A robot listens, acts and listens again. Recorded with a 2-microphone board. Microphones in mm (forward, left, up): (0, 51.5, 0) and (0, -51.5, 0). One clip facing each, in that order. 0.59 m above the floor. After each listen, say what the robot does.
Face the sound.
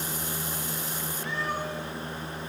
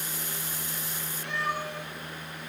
Turn 65° right.
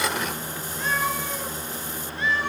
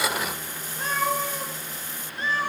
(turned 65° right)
Turn 35° right.
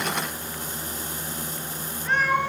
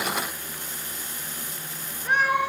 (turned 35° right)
Turn 15° right.
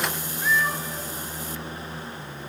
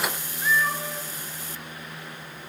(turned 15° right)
Keep listening.
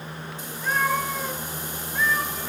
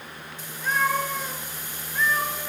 Facing the cat meowing.